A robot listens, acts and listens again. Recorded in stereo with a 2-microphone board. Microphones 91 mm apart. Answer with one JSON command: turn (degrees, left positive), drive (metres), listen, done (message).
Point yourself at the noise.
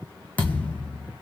{"turn": 20}
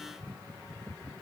{"listen": true}
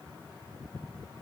{"done": "I heard a thud, but can't make it out now. It was about straight ahead or 140° left."}